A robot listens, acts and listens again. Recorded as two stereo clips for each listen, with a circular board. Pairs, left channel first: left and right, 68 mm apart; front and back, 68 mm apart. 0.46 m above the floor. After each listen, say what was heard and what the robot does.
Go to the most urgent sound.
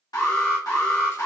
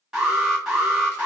The alarm: 100° left. Turn 100° left.
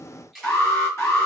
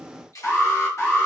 The alarm is now 45° left. Turn 45° left.
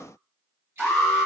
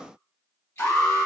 Drive 1.0 m forward.
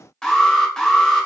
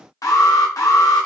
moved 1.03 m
The alarm is now 10° left. Turn 10° left.
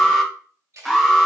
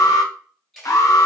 Drive 1.0 m forward.
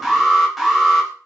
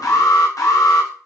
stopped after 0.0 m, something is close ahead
I am next to the alarm.